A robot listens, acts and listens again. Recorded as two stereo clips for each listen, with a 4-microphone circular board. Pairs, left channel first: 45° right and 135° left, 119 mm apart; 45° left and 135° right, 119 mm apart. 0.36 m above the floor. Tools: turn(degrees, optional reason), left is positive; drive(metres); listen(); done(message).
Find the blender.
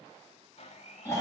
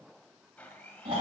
turn(degrees=-30, reason="The blender: 30° right.")
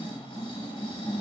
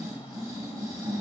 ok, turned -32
listen()
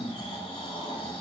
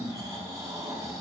listen()
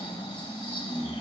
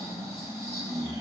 done("Facing where the blender came from. I can't hear it now.")